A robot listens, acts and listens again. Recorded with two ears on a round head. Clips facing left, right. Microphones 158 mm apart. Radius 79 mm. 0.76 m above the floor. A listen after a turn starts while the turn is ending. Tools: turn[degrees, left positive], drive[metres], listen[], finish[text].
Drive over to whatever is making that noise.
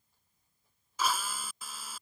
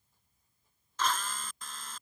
Action: turn[30]
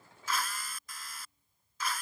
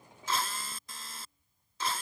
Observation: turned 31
Thought: So it is at 25° right.
Action: turn[-25]
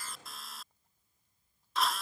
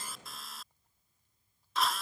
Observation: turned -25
Action: drive[1.0]
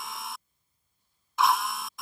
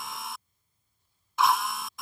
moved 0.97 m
Action: drive[1.0]
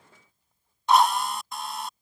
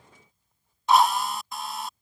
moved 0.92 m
Action: drive[1.0]
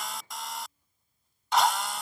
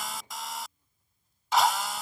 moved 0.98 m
Action: drive[1.0]
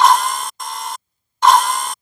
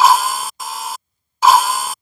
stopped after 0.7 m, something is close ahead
Action: finish[Arrived at the drill, straight ahead.]